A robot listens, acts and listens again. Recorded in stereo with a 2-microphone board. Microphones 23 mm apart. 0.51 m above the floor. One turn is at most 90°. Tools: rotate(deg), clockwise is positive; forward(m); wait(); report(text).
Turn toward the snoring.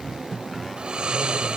rotate(45)
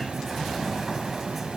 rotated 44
wait()
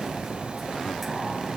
wait()
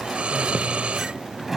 rotate(90)
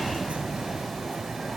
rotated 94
wait()
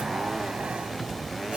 wait()
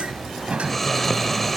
report("Found it: snoring, straight ahead.")